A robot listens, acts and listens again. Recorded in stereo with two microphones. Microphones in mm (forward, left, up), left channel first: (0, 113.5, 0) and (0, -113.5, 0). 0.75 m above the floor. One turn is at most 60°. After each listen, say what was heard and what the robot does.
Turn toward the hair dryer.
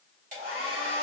The hair dryer: about 45° right or 135° right. Turn 45° right.
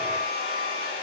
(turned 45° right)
So it is at 85° right. Turn 60° right.
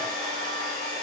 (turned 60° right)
The hair dryer is now 30° right. Turn 30° right.
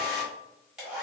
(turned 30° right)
Found it: a hair dryer, straight ahead.